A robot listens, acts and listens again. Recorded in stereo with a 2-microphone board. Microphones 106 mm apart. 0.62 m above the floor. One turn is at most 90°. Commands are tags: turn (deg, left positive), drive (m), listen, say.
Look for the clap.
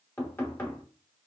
<listen/>
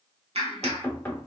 <turn deg="-70"/>
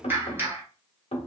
<turn deg="-20"/>
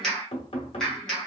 <say>Facing the clap, 1 to 2 m away.</say>